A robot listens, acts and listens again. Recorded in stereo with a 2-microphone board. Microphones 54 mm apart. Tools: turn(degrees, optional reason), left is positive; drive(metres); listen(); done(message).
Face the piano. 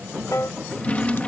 turn(degrees=70, reason="The piano: about 70° left or 110° left.")
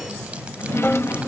listen()
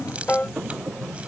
turn(degrees=35, reason="So it is at 35° left.")
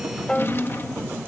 turn(degrees=20, reason="The piano is now 20° left.")
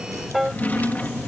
done("Found it: a piano, straight ahead.")